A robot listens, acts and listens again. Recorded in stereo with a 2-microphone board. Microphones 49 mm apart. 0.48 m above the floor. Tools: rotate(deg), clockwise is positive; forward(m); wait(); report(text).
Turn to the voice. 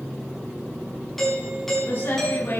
rotate(-35)
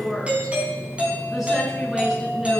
report("Found it: a woman speaking, straight ahead, over 4 m away.")